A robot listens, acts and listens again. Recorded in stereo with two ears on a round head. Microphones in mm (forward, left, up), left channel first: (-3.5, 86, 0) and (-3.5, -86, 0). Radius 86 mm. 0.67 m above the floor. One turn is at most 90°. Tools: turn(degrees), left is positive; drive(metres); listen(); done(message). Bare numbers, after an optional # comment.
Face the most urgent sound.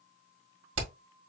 listen()
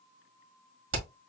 listen()
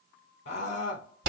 # The scream: about 45° left or 135° left.
turn(45)
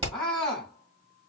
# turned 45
done("Facing the scream, 2 to 4 m away.")